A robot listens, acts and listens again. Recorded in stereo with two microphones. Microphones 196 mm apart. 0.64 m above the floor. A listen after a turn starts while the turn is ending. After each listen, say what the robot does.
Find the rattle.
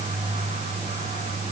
Keep listening.
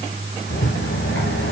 Turn 90° left.
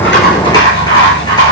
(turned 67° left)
Turn 25° left.
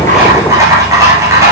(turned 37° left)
Turn 15° right.
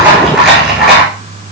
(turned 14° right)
Found it: a rattle, straight ahead.